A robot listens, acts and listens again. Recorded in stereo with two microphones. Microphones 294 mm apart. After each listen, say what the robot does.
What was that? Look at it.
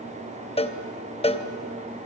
Turn 20° left.
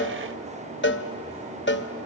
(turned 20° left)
Turn 145° left.
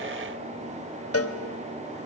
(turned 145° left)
Turn 50° left.
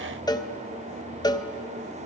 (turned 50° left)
Turn 15° left.
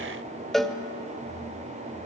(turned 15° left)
Found it: a cowbell, straight ahead.